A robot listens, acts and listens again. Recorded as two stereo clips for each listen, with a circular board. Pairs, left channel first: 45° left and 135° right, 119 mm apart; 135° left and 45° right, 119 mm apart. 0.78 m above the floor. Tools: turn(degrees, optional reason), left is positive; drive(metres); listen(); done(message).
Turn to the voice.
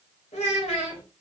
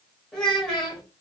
turn(degrees=50, reason="The child speaking: 50° left.")
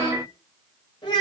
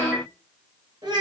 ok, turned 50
done("Facing the child speaking.")